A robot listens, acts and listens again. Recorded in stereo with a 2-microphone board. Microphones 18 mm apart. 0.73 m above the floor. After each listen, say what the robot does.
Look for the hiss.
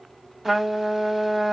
Keep listening.
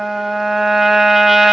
Keep listening.
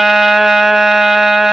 I can't make out a hiss, only a trumpet.